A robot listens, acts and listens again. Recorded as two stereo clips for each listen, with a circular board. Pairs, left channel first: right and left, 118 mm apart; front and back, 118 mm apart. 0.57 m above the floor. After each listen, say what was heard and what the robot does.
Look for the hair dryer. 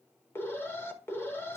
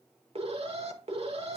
Keep listening.
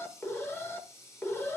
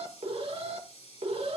Keep listening.
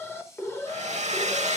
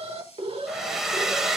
The hair dryer: 95° left. Turn 95° left.
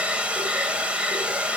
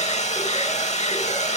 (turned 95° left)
The hair dryer is now 10° left. Turn 10° left.
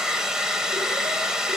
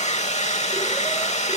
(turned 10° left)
Found it: a hair dryer, straight ahead, under 1 m away.